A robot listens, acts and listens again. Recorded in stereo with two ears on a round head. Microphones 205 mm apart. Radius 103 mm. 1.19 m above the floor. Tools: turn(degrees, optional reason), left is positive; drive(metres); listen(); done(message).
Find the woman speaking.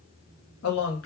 turn(degrees=65, reason="The woman speaking: about 65° left or 115° left.")
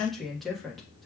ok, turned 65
done("Found it: a woman speaking, straight ahead.")